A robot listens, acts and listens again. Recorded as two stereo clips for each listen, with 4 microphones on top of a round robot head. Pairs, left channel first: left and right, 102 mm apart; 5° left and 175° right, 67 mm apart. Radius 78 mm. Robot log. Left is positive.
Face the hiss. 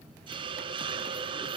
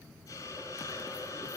note: The hiss: 50° right.
cmd yaw -50
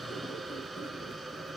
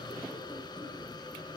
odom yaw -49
end: Found it: a hiss, straight ahead, 2 to 4 m away.